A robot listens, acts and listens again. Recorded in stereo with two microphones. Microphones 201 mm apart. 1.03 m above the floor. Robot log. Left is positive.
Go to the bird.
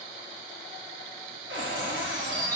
note: The bird: about 50° right or 130° right.
cmd yaw -50
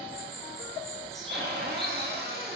cmd fwd 1.0
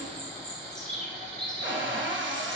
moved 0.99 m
cmd fwd 1.0
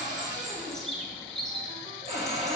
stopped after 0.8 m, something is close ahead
end: I am next to the bird.